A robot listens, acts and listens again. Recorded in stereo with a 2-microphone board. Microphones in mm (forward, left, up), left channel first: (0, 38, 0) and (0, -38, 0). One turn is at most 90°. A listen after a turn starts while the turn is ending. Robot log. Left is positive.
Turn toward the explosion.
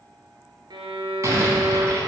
note: The explosion: about 40° right or 140° right.
cmd yaw -40
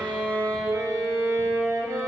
cmd idle
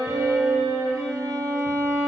end: I heard an explosion, but can't make it out now. It was about straight ahead or 100° right.